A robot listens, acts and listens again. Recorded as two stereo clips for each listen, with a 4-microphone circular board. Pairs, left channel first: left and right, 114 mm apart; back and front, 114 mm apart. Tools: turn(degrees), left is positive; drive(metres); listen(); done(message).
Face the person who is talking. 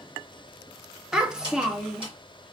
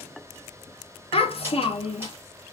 turn(degrees=-170)
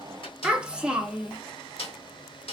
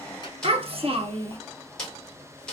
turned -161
turn(degrees=-10)
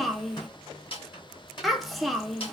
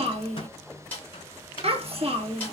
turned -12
done("Facing the child speaking, under 1 m away.")